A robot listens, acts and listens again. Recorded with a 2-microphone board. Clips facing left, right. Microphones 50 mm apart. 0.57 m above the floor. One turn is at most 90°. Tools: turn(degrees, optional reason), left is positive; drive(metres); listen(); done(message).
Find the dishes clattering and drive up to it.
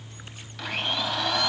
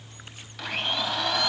listen()
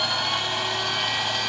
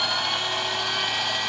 listen()
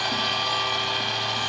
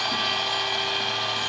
done("I can't make out dishes clattering to turn to.")